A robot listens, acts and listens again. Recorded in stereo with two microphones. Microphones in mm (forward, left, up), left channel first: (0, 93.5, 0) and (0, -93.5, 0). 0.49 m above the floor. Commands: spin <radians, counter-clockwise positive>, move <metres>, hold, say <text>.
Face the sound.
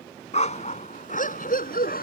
spin 0.96
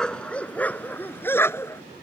spin 0.26
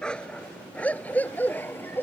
spin 0.17
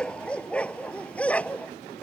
say Found it: a dog barking, straight ahead.